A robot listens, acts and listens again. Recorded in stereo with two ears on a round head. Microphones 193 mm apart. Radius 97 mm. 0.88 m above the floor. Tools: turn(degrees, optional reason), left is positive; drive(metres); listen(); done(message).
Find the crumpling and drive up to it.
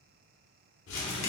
turn(degrees=70, reason="The crumpling: about 70° left or 110° left.")
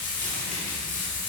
listen()
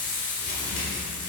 turn(degrees=40, reason="So it is at 40° left.")
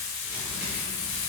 listen()
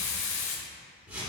turn(degrees=-10, reason="The crumpling is now 10° right.")
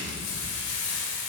drive(metres=1.0)
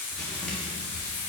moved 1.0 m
drive(metres=1.0)
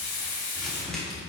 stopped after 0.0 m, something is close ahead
done("Arrived at the crumpling, straight ahead.")